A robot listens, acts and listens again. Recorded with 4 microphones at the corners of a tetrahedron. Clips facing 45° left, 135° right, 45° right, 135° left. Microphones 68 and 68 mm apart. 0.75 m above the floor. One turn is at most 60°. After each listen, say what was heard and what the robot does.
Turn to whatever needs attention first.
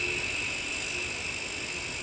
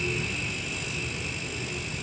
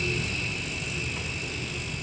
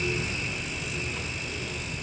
Keep listening.
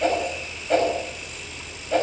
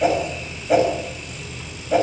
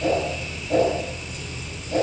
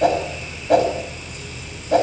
Keep listening.
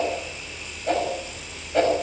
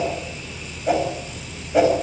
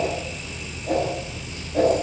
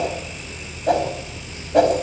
I can't make out anything urgent to turn to.